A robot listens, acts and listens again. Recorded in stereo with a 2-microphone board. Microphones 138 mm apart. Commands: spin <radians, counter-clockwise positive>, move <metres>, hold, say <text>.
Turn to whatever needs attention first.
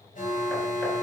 spin 1.22
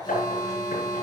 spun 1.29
spin 0.52
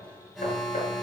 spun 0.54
say Facing the alarm, over 4 m away.